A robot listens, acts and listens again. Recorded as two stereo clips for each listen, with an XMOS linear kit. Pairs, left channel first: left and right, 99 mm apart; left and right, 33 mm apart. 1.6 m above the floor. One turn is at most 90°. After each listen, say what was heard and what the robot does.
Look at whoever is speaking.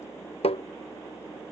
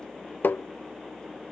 Keep listening.
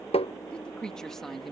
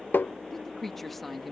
Turn 30° left.
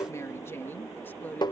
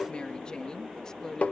So it is at 160° left. Turn 90° left.
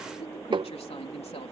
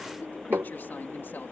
The woman speaking is now 85° left. Turn 85° left.
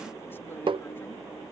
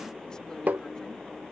Keep listening.
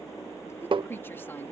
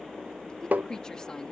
The woman speaking is now 20° left. Turn 20° left.
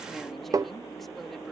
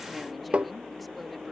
Keep listening.
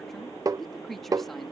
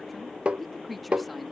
Found it: a woman speaking, straight ahead.